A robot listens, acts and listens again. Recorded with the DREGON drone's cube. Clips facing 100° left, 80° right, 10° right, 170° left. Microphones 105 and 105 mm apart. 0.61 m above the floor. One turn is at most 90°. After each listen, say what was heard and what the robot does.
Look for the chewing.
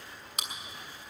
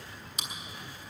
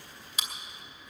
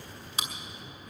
The chewing: 115° left. Turn 90° left.
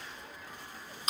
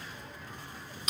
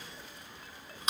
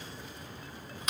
The chewing is now 45° left. Turn 45° left.
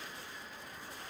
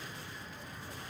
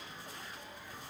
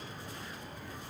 Keep listening.
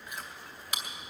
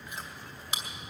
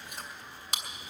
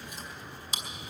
The chewing is now 15° right. Turn 15° right.
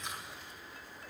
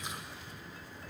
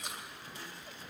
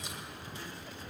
Keep listening.
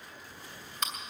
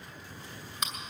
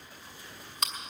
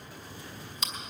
Found it: chewing, straight ahead, 2 to 4 m away.